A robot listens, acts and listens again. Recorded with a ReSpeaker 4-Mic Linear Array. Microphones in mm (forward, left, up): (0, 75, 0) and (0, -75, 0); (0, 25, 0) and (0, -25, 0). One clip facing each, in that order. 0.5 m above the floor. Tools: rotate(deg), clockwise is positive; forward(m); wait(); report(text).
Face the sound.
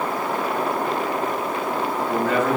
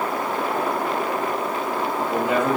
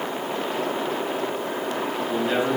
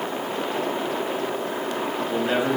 rotate(20)
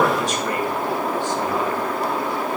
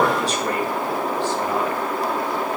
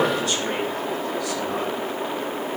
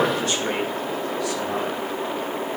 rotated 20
rotate(140)
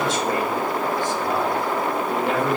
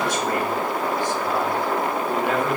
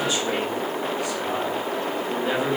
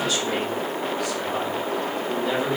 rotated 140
rotate(-30)
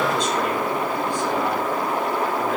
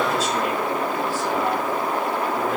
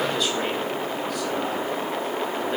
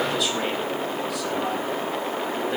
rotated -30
wait()
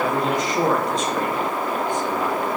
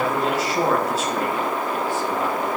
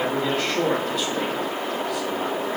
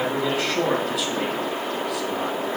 report("Facing the man speaking.")